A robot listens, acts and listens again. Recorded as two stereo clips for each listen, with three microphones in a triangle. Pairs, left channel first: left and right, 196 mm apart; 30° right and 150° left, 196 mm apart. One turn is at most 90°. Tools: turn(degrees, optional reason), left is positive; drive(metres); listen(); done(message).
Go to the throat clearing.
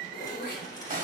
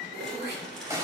turn(degrees=90, reason="The throat clearing: 125° left.")
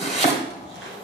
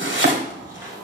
turn(degrees=35, reason="Nothing new. It was at 35° left.")
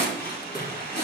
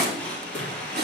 turn(degrees=20, reason="The throat clearing is now 20° left.")
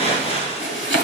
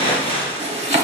listen()
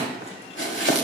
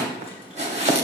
listen()
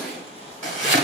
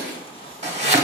done("Facing where the throat clearing came from. I can't hear it now. I did not reach it.")